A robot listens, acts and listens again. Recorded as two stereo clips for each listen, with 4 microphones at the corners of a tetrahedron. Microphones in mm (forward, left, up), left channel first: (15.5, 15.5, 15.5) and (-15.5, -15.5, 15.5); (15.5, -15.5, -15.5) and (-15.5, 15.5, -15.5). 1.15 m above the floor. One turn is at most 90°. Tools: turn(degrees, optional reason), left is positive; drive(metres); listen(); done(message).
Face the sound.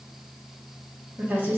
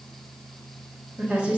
turn(degrees=-90, reason="The woman speaking: 170° right.")
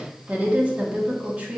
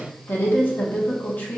turn(degrees=-80, reason="The woman speaking is now 80° right.")
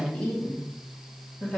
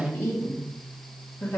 turn(degrees=-15, reason="The woman speaking is now 15° right.")
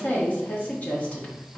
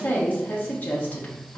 done("Facing the woman speaking.")